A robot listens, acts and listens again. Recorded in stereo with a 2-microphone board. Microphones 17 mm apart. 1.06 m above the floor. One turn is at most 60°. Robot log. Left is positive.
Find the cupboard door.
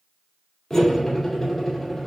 cmd idle
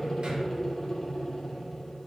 cmd idle
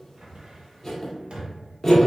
note: The cupboard door: about 70° right or 110° right.
cmd yaw -60
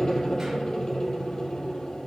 cmd idle
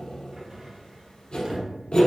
note: So it is at 40° right.
cmd yaw -40
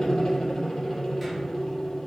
cmd idle
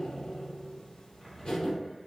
end: Facing the cupboard door.